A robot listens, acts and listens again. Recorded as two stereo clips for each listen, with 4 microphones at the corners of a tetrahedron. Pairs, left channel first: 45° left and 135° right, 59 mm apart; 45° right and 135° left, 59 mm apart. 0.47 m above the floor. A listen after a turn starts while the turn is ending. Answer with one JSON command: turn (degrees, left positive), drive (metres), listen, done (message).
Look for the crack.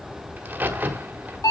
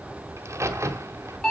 {"turn": 165}
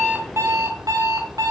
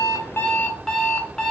{"done": "I heard a crack from this way, but can't make it out now."}